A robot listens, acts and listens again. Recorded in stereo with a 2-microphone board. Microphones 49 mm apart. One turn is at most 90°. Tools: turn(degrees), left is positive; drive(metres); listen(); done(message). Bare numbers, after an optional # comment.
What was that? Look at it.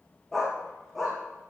turn(30)
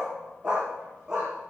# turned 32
# So it is at 10° right.
turn(-10)
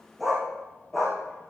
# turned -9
done("Facing the dog barking, over 4 m away.")